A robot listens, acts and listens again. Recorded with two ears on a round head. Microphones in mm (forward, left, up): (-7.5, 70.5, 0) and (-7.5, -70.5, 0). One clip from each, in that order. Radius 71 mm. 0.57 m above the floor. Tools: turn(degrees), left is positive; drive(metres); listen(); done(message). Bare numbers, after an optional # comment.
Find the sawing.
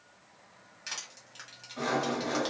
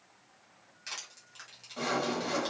# The sawing: about 75° right or 105° right.
turn(-75)
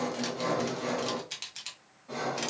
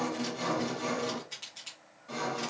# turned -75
# So it is at 30° right.
turn(-30)
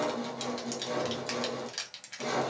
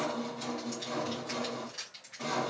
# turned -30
done("Found it: sawing, straight ahead, 1 to 2 m away.")